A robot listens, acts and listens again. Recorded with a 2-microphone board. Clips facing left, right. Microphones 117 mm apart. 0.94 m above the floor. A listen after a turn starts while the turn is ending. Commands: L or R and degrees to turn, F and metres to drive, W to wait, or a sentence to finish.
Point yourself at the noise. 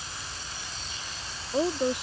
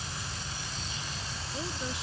L55
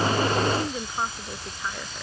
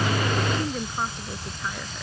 Found it: a woman speaking, straight ahead.